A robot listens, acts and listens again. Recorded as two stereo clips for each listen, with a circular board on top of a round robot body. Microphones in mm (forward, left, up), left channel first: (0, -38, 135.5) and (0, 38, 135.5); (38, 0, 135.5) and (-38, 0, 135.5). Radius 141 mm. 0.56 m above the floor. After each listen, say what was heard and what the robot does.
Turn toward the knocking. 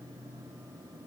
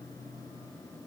Keep listening.
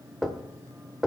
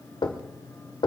Found it: knocking, straight ahead.